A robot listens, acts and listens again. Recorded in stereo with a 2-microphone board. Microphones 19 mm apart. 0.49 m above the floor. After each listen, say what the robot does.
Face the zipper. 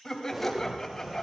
Turn 30° right.
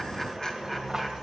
Turn 145° right.
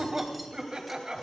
Keep listening.
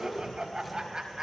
Found it: a zipper, straight ahead.